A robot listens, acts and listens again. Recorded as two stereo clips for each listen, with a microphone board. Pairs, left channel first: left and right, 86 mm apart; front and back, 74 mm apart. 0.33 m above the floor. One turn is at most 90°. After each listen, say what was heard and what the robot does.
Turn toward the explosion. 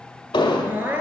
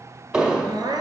The explosion: 100° left. Turn 90° left.
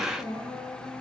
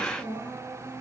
Nothing new. It was at 10° left. Turn 10° left.
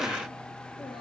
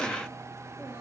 I heard an explosion from this way, but can't make it out now.